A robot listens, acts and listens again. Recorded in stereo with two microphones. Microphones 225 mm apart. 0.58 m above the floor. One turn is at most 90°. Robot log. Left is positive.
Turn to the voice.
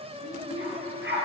note: The child speaking: about 60° left or 120° left.
cmd yaw +60
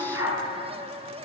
cmd idle
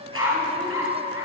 cmd idle
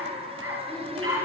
end: I heard a child speaking, but can't make it out now. It was about straight ahead or 60° left.